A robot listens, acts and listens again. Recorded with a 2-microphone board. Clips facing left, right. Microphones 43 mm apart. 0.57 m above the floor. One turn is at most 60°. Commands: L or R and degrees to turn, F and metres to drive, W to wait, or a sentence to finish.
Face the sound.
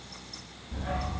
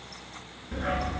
R60
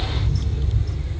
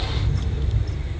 R20
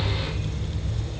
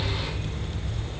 Facing the dog barking, 2 to 4 m away.